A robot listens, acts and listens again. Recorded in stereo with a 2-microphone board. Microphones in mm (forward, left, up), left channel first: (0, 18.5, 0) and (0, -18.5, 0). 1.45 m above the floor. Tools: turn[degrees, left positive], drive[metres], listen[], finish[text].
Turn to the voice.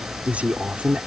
Thought: The man speaking: about 40° right or 140° right.
Action: turn[-40]
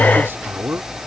Thought: So it is at 100° right.
Action: turn[-100]
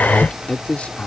Thought: The man speaking is now 35° left.
Action: turn[35]
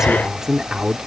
Thought: The man speaking is now 10° right.
Action: turn[-10]
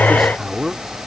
Action: finish[Found it: a man speaking, straight ahead.]